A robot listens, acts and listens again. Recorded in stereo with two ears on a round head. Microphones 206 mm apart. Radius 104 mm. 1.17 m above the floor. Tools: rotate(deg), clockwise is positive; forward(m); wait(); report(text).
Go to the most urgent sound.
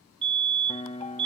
rotate(25)
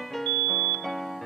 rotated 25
rotate(130)
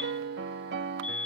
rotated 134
forward(1.0)
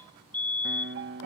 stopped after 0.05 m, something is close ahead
rotate(-10)
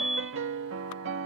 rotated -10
report("Something is in my way. I am facing the fire alarm but have not reached it.")